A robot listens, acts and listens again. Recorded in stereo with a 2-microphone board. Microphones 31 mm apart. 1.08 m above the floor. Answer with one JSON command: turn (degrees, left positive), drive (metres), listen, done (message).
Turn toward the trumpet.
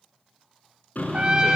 {"turn": -30}
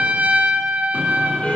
{"turn": -115}
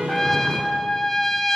{"turn": 10}
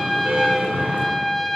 {"done": "Found it: a trumpet, straight ahead, 1 to 2 m away."}